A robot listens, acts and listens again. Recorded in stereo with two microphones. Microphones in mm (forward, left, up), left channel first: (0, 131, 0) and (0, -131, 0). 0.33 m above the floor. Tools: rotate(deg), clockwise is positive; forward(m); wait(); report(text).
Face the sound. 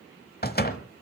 rotate(-40)
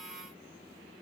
wait()
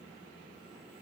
report("I heard a door slam, but can't make it out now. It was about straight ahead or 100° left.")